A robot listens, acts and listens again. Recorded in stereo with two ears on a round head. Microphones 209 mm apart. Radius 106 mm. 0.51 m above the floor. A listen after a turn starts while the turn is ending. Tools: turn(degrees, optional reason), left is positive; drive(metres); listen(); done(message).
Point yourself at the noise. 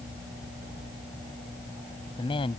turn(degrees=25, reason="The woman speaking: about 25° left or 155° left.")
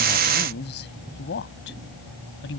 turn(degrees=120, reason="So it is at 120° left.")
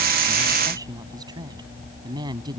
turn(degrees=-20, reason="The woman speaking is now 20° right.")
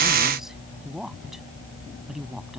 done("Found it: a woman speaking, straight ahead.")